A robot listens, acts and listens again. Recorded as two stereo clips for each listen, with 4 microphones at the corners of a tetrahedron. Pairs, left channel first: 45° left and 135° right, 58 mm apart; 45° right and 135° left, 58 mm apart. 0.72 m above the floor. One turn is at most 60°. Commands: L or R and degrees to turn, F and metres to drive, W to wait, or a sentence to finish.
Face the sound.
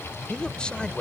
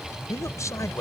R30
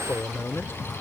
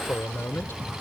Found it: a man speaking, straight ahead.